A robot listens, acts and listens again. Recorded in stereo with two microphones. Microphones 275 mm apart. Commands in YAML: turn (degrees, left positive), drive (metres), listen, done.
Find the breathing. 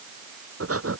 turn: -55
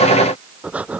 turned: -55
done: "Facing the breathing."